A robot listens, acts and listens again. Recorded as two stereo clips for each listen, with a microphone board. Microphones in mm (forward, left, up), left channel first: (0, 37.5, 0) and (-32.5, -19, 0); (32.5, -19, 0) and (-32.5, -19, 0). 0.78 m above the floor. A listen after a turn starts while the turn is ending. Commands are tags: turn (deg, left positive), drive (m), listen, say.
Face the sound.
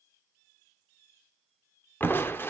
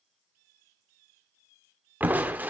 <turn deg="120"/>
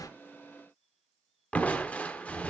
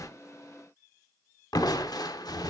<turn deg="-10"/>
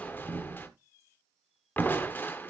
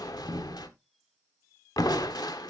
<say>Facing the crushing, 1 to 2 m away.</say>